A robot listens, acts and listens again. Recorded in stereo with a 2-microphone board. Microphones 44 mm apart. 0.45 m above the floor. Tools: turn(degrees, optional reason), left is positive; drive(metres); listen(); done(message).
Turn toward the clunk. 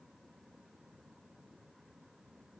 listen()
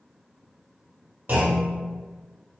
turn(degrees=-45, reason="The clunk: about 45° right or 135° right.")
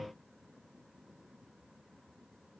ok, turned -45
listen()
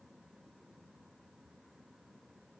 done("I heard a clunk, but can't make it out now. It was about straight ahead or 90° right.")